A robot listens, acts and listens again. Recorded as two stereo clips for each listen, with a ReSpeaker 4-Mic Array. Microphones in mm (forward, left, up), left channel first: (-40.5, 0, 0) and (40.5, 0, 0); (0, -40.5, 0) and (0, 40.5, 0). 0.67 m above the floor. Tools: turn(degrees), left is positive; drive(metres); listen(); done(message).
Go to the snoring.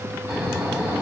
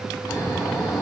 turn(degrees=-65)
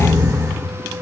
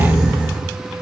turn(degrees=25)
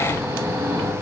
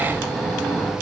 drive(metres=1.0)
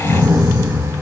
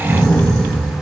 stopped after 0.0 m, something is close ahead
done("Something is in my way. I am facing the snoring but have not reached it.")